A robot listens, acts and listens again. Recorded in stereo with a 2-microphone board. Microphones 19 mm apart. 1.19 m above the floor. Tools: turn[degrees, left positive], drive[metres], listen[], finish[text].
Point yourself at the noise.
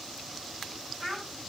Thought: The child speaking: about 15° left or 165° left.
Action: turn[15]
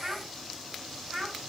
Action: finish[Found it: a child speaking, straight ahead.]